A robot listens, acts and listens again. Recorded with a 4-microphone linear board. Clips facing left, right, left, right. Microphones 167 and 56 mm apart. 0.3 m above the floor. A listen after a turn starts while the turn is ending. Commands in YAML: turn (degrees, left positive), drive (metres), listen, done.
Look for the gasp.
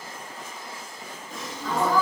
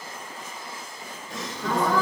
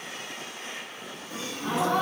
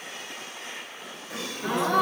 turn: -90
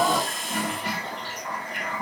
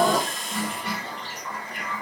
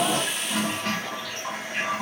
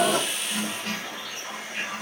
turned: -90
done: "Facing where the gasp came from. I can't hear it now."